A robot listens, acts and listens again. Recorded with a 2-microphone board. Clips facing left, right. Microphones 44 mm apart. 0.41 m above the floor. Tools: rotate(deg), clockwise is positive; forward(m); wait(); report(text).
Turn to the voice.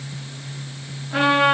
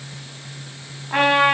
wait()
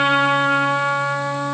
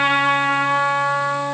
wait()
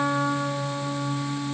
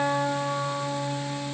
report("I can't make out anyone speaking, only a trumpet.")